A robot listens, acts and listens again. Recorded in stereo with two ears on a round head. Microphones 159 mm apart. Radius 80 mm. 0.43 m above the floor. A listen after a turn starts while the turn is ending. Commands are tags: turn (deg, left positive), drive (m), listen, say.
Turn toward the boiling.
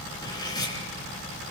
<listen/>
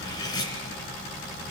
<listen/>
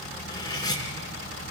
<say>I can't make out boiling to turn to.</say>